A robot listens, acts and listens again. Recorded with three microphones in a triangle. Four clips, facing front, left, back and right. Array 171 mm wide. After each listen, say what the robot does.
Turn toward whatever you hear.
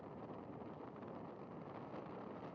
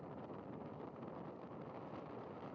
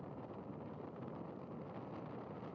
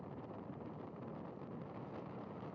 Keep listening.
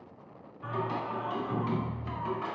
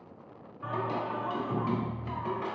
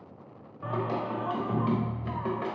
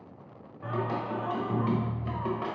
Turn 140° right.
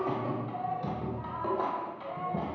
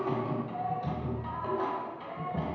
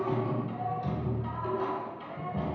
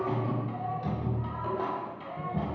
Facing the singing.